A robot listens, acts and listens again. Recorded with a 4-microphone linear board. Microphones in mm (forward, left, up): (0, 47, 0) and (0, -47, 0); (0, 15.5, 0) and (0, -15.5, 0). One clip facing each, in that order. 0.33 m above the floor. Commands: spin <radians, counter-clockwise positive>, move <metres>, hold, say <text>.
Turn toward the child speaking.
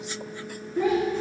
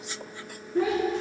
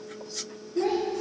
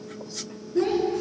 spin -1.31
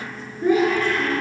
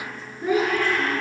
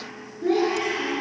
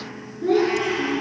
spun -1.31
spin -0.17
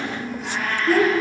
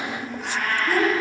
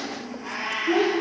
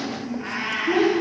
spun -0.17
say Found it: a child speaking, straight ahead.